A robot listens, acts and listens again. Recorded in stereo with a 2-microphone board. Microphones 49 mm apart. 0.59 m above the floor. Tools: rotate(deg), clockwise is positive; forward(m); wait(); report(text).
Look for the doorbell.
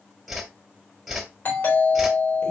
rotate(-45)
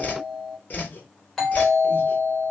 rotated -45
rotate(-10)
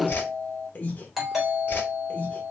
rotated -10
report("Facing the doorbell, 2 to 4 m away.")